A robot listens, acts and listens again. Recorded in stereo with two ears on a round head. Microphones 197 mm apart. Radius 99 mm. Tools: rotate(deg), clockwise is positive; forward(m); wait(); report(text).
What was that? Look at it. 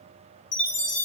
rotate(-55)
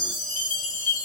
rotate(-50)
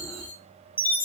rotate(-10)
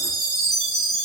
report("Found it: a chime, straight ahead, under 1 m away.")